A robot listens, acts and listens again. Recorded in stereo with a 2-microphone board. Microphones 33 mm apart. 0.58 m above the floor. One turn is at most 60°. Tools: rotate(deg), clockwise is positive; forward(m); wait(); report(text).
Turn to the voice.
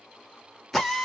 wait()
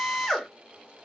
wait()
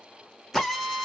report("I can't make out anyone speaking, only a drill.")